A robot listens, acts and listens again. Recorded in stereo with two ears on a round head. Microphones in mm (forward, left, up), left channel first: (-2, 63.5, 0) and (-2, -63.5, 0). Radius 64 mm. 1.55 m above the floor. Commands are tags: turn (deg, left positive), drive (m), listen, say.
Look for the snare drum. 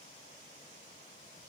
<listen/>
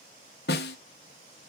<turn deg="90"/>
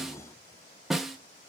<say>Found it: a snare drum, straight ahead.</say>